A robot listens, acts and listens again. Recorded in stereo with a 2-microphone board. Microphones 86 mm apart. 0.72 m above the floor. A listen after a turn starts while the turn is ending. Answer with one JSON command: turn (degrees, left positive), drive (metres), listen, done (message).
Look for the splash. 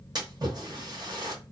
{"turn": -50}
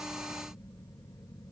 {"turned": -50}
{"listen": true}
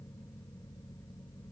{"done": "I heard a splash, but can't make it out now. It was about straight ahead or 80° right."}